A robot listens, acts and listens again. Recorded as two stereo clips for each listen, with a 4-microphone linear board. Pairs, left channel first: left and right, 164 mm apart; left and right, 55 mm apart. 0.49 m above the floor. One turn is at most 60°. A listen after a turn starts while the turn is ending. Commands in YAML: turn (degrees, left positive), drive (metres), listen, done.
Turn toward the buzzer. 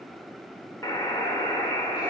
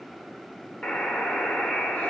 turn: 20
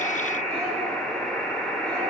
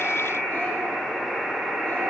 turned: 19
done: "Facing the buzzer."